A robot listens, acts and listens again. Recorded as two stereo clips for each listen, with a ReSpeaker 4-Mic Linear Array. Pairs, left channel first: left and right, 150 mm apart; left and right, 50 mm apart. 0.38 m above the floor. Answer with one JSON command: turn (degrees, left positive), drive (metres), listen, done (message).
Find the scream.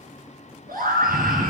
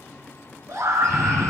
{"turn": -90}
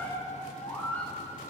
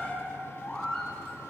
{"turn": 15}
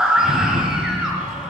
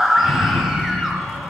{"done": "Facing the scream."}